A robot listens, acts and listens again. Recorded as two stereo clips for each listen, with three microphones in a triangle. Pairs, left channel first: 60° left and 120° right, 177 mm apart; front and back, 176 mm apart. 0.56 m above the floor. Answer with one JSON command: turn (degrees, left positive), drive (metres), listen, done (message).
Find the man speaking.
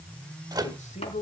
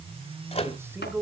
{"turn": 100}
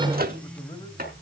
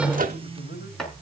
{"listen": true}
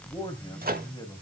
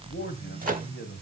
{"done": "Facing the man speaking."}